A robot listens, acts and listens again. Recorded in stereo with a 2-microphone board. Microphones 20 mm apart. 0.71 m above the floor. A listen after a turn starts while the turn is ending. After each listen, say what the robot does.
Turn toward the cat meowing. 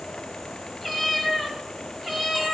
Turn 20° right.
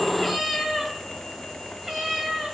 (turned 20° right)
Turn 35° right.
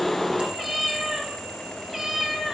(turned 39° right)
Turn 25° right.
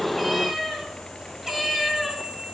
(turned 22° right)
Facing the cat meowing.